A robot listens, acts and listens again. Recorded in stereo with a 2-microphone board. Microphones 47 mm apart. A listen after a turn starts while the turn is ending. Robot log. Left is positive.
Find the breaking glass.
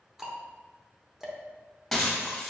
cmd yaw +30
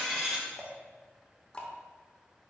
cmd idle
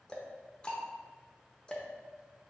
end: I heard breaking glass, but can't make it out now. It was about 25° right or 145° left.